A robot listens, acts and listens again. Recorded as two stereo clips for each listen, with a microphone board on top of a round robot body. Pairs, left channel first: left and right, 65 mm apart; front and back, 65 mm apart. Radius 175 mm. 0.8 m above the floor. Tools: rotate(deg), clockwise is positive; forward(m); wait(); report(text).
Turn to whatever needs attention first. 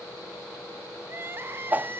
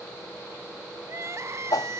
rotate(140)
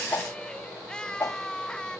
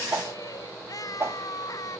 rotate(-15)
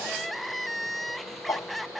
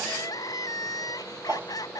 report("Found it: crying, straight ahead.")